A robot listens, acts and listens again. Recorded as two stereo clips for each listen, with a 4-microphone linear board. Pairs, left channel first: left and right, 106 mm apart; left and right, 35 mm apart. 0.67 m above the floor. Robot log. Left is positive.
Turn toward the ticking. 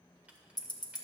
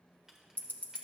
note: The ticking: about 40° left or 140° left.
cmd yaw +40
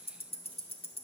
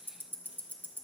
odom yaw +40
note: So it is at 95° left.
cmd yaw +95
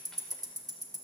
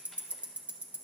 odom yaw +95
note: The ticking is now 35° right.
cmd yaw -35
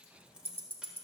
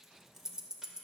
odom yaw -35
note: The ticking is now 20° right.
cmd yaw -20
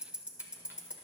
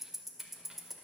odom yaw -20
note: The ticking is now 10° right.
cmd yaw -10
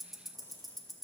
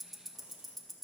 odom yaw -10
end: Found it: ticking, straight ahead.